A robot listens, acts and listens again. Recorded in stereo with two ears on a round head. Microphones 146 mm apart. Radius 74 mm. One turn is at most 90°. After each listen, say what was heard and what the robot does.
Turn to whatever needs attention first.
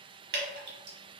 Keep listening.
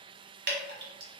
Keep listening.
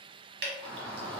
Turn 30° left.
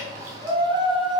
So it is at 25° right. Turn 25° right.
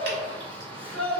The shout is now 10° left. Turn 10° left.
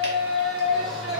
Found it: a shout, straight ahead, 1 to 2 m away.